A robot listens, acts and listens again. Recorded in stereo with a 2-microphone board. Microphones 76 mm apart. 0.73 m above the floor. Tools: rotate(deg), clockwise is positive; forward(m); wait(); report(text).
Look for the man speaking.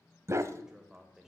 rotate(30)
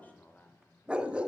rotate(-20)
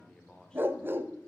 rotate(-10)
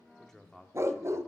report("Found it: a man speaking, straight ahead, 1 to 2 m away.")